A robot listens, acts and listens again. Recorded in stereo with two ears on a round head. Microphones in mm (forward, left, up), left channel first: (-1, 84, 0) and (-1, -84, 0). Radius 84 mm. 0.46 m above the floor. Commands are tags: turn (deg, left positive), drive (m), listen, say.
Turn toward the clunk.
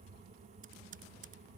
<listen/>
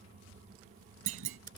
<turn deg="-75"/>
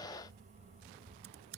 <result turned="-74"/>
<listen/>
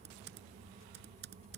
<say>I heard a clunk, but can't make it out now. It was about straight ahead or 35° right.</say>